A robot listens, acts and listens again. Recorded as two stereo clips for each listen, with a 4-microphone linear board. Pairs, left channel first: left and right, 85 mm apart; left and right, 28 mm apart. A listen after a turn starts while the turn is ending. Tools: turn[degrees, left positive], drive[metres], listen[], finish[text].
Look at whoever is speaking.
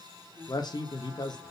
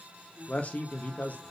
Thought: The man speaking: about 55° left or 125° left.
Action: turn[55]
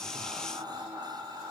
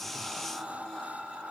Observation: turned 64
Action: listen[]
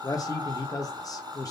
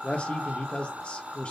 Thought: So it is at 50° left.
Action: turn[50]
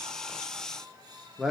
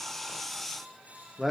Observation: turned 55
Action: finish[Found it: a man speaking, straight ahead, 1 to 2 m away.]